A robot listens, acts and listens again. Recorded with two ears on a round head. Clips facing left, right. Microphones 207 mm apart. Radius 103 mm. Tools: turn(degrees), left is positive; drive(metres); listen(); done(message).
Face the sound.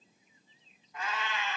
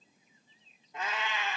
turn(degrees=-15)
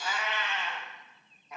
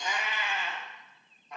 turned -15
turn(degrees=30)
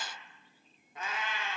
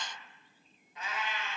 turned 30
turn(degrees=130)
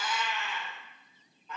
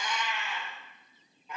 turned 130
turn(degrees=-10)
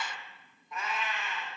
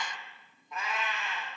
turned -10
done("Found it: a cat meowing, straight ahead.")